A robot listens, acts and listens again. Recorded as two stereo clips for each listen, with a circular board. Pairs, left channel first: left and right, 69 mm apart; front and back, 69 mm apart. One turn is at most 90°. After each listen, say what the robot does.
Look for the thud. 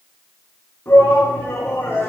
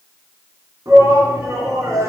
Keep listening.
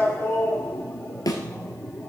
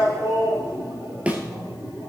Turn 90° left.
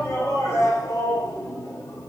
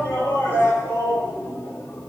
Turn 20° left.
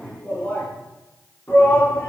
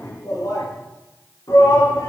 Facing where the thud came from. I can't hear it now.